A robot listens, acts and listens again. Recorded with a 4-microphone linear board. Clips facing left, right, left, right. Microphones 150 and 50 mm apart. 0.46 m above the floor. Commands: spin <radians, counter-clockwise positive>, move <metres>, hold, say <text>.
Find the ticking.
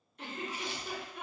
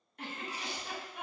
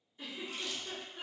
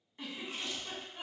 hold
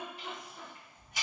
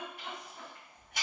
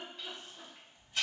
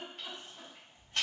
spin -1.05
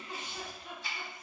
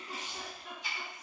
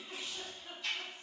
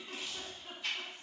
spin -0.26
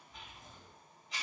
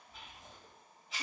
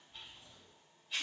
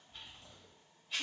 say Found it: ticking, straight ahead.